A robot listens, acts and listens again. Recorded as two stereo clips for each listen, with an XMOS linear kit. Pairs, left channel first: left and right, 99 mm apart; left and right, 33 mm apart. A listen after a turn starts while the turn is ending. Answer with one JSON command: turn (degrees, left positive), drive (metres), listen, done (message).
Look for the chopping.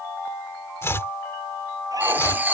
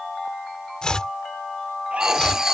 {"turn": 25}
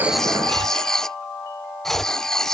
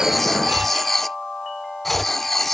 {"done": "Found it: chopping, straight ahead."}